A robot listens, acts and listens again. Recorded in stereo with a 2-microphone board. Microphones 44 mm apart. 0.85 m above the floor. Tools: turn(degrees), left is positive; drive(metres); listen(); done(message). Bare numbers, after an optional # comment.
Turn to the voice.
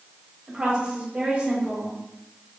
# The woman speaking: about 40° right or 140° right.
turn(-40)
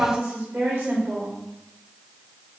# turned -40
# So it is at 105° right.
turn(-105)
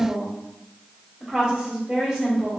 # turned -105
done("Facing the woman speaking.")